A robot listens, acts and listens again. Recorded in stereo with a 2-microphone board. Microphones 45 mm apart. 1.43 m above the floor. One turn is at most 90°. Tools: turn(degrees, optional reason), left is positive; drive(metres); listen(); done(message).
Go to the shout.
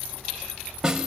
listen()
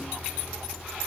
listen()
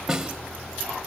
done("I can't make out a shout to turn to.")